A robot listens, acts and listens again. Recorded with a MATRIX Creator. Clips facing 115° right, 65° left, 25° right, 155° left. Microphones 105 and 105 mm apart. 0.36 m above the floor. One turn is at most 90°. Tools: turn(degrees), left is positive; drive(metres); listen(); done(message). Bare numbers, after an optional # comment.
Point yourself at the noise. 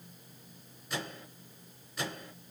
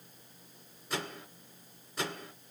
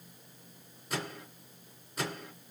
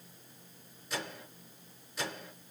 # The microwave: 20° left.
turn(20)
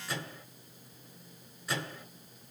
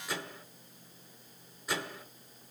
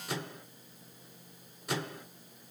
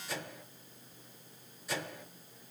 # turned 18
done("Found it: a microwave, straight ahead.")